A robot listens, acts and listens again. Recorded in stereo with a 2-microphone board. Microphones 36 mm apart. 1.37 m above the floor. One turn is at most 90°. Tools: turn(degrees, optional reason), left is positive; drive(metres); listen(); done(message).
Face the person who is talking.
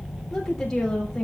turn(degrees=30)
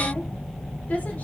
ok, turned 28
turn(degrees=90, reason="So it is at 140° left.")
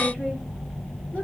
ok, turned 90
turn(degrees=50, reason="Nothing new. It was at 50° left.")
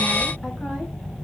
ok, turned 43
listen()
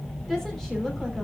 done("Found it: a woman speaking, straight ahead.")